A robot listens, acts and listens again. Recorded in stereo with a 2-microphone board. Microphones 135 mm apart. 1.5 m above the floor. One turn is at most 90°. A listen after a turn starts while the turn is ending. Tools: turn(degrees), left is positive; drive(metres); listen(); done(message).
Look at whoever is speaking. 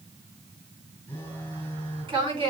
turn(degrees=-35)
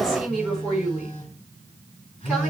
done("Facing the woman speaking, over 4 m away.")